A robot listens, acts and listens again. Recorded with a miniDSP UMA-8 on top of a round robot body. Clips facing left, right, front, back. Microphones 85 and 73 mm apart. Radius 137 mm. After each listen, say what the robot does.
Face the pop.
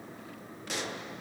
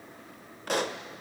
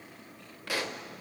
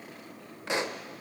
Turn 115° right.
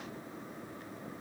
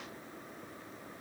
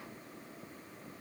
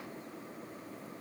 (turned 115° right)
Facing where the pop came from. I can't hear it now.